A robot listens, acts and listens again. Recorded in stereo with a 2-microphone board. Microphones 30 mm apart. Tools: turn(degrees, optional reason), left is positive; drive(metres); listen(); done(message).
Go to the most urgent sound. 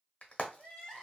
turn(degrees=30)
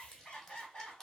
turn(degrees=135, reason="So it is at 135° left.")
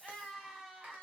drive(metres=1.0)
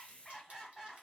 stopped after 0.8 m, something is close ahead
turn(degrees=15, reason="The crying is now 15° left.")
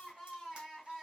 turn(degrees=10, reason="The crying is now 10° left.")
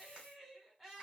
done("I am next to the crying.")